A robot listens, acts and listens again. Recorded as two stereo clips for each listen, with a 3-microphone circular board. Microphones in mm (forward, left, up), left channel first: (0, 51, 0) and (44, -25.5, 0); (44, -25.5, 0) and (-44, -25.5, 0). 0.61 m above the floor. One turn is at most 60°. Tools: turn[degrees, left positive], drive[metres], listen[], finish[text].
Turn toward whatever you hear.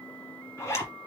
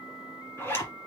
Thought: The zipper: 60° left.
Action: turn[60]
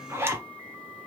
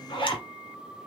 Action: finish[Facing the zipper.]